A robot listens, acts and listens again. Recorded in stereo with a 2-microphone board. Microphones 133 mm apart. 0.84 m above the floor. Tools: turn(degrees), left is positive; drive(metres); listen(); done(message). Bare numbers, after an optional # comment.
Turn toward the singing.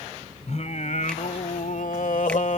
# The singing: about 65° left or 115° left.
turn(65)
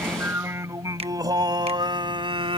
# So it is at 40° right.
turn(-40)
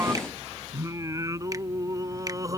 # The singing is now 25° right.
turn(-25)
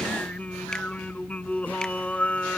# The singing is now 10° left.
turn(10)
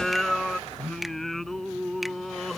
done("Found it: singing, straight ahead.")